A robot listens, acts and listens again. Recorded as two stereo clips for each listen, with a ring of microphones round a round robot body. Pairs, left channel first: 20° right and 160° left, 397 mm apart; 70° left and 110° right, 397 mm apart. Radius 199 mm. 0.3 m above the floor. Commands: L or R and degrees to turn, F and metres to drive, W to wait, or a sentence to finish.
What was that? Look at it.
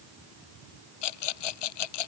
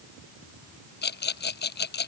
Found it: a rattle, straight ahead.